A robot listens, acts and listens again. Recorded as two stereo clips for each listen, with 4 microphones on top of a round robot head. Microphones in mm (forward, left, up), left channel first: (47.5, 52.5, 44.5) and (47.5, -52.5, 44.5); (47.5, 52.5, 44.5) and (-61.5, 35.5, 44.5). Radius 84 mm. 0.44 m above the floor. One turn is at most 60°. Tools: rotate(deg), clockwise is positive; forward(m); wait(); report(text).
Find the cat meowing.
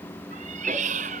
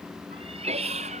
rotate(60)
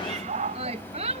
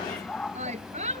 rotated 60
rotate(60)
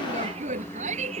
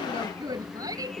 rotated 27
rotate(50)
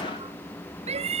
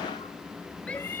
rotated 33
rotate(60)
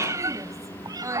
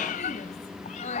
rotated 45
rotate(40)
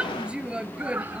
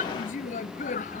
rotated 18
rotate(20)
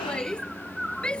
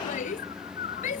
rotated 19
report("Facing the cat meowing.")